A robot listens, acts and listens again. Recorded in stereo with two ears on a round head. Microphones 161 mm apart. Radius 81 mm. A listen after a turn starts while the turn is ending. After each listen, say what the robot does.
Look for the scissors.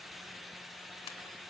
Keep listening.
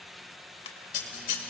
Turn 45° left.
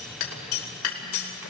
Turn 90° left.
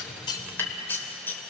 Turn 10° left.
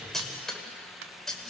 Found it: scissors, straight ahead.